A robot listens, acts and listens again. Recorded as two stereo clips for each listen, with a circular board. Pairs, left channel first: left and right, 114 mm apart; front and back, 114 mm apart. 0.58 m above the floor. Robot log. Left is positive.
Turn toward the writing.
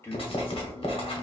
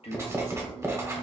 note: The writing: 120° left.
cmd yaw +120
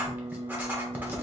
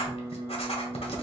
note: The writing is now 15° right.
cmd yaw -15
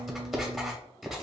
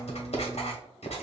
end: Facing the writing, 1 to 2 m away.